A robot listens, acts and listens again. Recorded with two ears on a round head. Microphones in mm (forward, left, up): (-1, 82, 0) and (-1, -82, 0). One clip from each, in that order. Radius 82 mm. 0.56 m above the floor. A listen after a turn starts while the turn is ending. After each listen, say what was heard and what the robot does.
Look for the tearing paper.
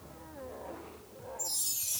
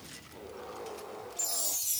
Keep listening.
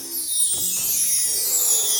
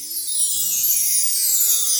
Keep listening.
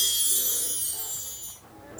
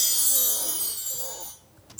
I can't make out tearing paper to turn to.